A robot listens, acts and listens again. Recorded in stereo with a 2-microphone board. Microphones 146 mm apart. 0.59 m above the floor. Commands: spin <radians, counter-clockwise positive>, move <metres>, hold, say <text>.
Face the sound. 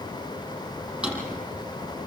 spin -0.52
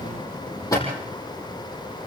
spin 0.44
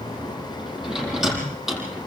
say Facing the drawer, over 4 m away.